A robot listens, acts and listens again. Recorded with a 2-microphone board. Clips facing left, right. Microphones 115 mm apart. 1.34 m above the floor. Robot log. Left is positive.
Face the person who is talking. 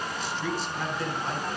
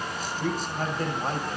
note: The man speaking: about 45° right or 135° right.
cmd yaw -45
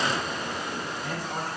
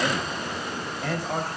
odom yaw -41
note: So it is at 95° right.
cmd yaw -95
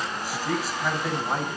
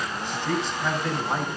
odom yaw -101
end: Found it: a man speaking, straight ahead, over 4 m away.